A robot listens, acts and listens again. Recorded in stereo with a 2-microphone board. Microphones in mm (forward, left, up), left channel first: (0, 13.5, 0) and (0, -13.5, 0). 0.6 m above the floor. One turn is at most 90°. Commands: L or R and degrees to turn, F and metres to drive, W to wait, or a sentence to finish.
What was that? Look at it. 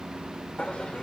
L50
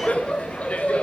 L65
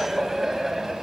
R10
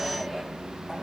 Facing the laughter, over 4 m away.